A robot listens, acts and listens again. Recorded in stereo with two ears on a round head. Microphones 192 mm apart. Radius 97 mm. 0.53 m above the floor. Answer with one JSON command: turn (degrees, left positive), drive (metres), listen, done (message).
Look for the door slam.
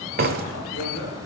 {"turn": -45}
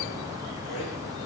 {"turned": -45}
{"listen": true}
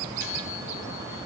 {"done": "I heard a door slam, but can't make it out now. It was about straight ahead or 90° right."}